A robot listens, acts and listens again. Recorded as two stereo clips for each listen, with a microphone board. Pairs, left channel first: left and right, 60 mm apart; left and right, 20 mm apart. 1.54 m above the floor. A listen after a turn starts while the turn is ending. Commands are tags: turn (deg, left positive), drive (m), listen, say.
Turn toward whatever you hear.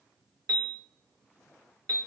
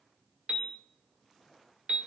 <turn deg="-90"/>
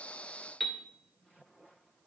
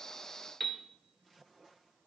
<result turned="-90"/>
<say>Facing the piano, under 1 m away.</say>